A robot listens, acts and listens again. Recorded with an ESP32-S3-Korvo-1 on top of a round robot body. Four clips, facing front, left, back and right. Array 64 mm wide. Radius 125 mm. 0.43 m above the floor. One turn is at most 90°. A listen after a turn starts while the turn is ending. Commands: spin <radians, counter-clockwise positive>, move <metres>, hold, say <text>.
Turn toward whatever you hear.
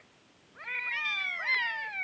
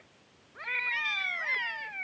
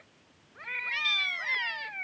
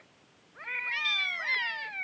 hold
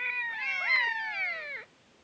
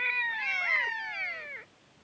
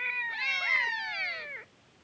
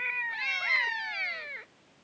hold
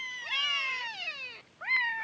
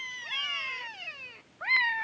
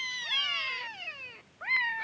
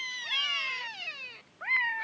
say I can't make out anything.